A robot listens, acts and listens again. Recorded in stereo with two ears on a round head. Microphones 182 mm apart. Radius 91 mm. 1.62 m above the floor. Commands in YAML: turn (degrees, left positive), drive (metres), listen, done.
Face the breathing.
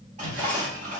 turn: -65
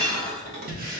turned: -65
turn: -45
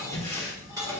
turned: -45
turn: 15
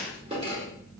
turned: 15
listen: true
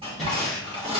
done: "Facing the breathing, under 1 m away."